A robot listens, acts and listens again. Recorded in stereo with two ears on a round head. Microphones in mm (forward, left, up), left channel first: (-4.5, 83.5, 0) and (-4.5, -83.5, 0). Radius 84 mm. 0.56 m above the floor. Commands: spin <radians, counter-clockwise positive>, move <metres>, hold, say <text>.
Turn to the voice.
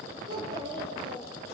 spin -0.44
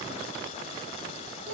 spin -2.27
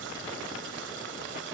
hold
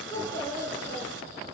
spin 0.26
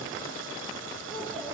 say Facing the child speaking, 2 to 4 m away.